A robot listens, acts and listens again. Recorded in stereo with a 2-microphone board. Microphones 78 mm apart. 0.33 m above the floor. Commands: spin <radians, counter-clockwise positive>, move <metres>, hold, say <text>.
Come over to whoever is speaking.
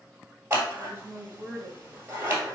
spin -0.44
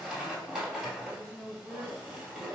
spin -2.18
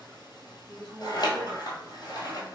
move 1.0
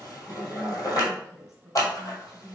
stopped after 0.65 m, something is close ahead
say I am next to the woman speaking.